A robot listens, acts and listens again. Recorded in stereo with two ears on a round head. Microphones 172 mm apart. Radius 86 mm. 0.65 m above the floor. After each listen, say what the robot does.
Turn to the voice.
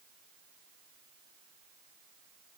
Keep listening.
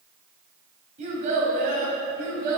Turn 50° right.
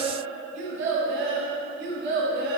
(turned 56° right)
Turn 65° right.
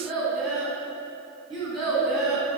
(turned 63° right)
Facing the child speaking, 2 to 4 m away.